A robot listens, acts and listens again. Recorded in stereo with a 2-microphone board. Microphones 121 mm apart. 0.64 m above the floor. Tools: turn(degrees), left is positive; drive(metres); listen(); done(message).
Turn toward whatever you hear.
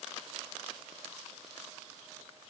listen()
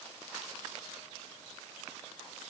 listen()
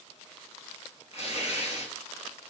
turn(degrees=55)
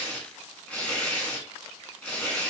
turn(degrees=10)
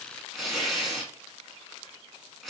done("Found it: tearing paper, straight ahead, 1 to 2 m away.")